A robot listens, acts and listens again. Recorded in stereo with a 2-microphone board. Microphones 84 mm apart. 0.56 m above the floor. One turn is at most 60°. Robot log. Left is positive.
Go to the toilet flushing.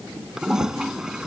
cmd yaw -30
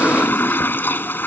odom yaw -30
note: So it is at 25° left.
cmd yaw +25
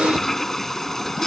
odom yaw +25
cmd fwd 1.0
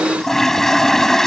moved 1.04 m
cmd fwd 1.0
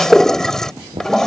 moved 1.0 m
cmd fwd 1.0
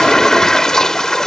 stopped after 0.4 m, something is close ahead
end: Arrived at the toilet flushing, straight ahead.